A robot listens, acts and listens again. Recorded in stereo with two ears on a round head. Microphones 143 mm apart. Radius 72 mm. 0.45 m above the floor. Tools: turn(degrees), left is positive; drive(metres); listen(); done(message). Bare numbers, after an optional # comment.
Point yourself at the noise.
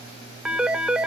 turn(-30)
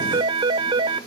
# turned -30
# So it is at 145° right.
turn(-145)
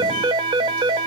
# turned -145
# The phone ringing is now 35° right.
turn(-35)
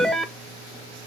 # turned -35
done("Facing the phone ringing.")